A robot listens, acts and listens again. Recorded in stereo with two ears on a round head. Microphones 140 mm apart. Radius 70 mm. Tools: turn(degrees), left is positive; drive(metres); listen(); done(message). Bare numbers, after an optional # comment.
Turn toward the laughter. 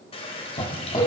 # The laughter: about 25° left or 155° left.
turn(25)
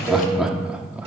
# So it is at 10° right.
turn(-10)
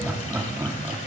# The laughter is now 20° right.
turn(-20)
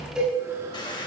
listen()
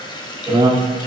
# The laughter is now 30° right.
turn(-30)
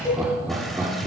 # The laughter is now 15° right.
turn(-15)
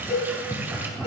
done("Facing the laughter.")